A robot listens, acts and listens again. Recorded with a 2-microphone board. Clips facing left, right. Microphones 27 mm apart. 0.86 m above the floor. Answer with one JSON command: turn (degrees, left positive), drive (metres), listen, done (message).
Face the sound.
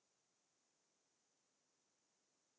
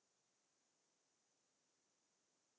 {"listen": true}
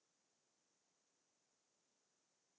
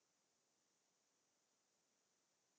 {"listen": true}
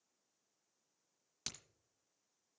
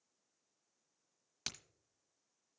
{"turn": -15}
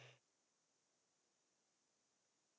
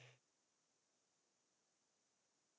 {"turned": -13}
{"listen": true}
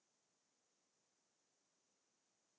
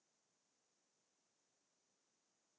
{"done": "I heard a crack, but can't make it out now. It was about straight ahead or 150° right."}